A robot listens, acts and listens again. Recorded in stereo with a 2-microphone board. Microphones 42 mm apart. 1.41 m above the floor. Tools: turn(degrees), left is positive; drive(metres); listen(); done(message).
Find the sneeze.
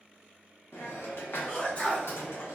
turn(degrees=30)
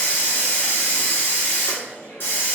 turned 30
listen()
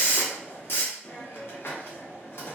done("I heard a sneeze, but can't make it out now. It was about straight ahead or 120° left.")